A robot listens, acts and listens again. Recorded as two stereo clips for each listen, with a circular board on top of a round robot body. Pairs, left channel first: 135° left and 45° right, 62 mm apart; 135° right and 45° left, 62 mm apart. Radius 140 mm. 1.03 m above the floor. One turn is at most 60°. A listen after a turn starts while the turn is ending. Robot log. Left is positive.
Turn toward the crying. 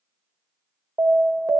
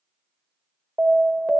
cmd idle
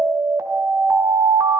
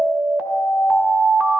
cmd idle
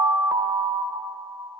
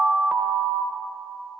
end: I can't make out crying to turn to.